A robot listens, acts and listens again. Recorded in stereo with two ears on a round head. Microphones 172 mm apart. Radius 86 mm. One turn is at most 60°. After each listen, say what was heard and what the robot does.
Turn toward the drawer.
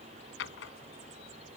The drawer: about 65° left or 115° left. Turn 60° left.
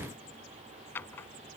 So it is at 10° left. Turn 10° left.
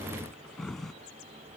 Facing the drawer.